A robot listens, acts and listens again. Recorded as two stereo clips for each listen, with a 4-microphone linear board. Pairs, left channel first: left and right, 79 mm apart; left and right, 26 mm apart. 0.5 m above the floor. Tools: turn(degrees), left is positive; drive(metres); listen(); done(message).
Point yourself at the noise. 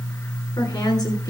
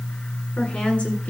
turn(degrees=60)
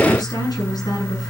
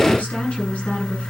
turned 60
turn(degrees=60)
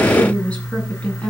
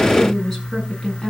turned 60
turn(degrees=15)
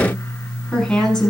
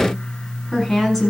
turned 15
done("Facing the woman speaking, over 4 m away.")